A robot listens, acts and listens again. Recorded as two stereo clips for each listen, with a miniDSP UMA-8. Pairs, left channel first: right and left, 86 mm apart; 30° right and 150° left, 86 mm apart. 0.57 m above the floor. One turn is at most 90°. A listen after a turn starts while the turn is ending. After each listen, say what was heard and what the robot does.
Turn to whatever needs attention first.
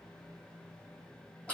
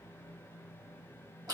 Keep listening.
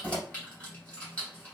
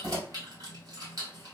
Keep listening.
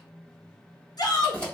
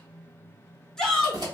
The shout: 110° right. Turn 90° right.
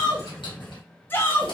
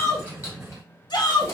The shout is now 30° right. Turn 30° right.
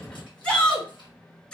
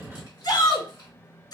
The shout is now 10° right. Turn 10° right.
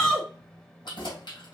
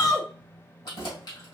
Found it: a shout, straight ahead, 1 to 2 m away.